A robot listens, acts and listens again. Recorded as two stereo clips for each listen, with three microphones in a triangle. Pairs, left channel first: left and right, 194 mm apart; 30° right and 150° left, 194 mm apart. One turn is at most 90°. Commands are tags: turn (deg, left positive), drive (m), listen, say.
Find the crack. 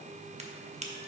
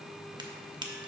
<turn deg="-90"/>
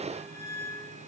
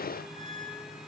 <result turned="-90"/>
<turn deg="-50"/>
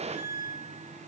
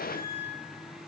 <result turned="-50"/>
<say>I heard a crack from this way, but can't make it out now.</say>